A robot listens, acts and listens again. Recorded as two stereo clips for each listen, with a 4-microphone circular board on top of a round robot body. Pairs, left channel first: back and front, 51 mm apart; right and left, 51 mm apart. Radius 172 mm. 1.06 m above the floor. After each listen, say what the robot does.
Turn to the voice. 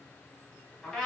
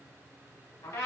Keep listening.
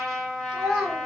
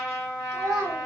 Turn 80° left.
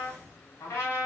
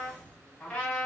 Keep listening.
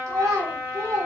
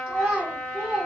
Turn 20° left.
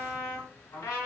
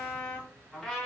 Keep listening.
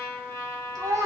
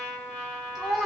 Turn 10° left.
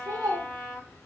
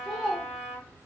Found it: a child speaking, straight ahead.